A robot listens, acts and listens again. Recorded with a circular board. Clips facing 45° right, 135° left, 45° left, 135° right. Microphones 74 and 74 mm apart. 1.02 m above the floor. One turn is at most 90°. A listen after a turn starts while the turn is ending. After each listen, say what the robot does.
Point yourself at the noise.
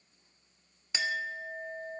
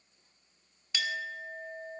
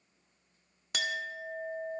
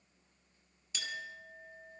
Turn 20° left.
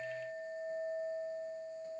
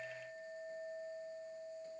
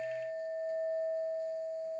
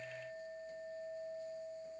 Turn 10° left.
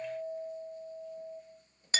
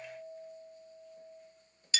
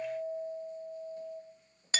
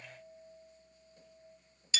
Facing the clink, under 1 m away.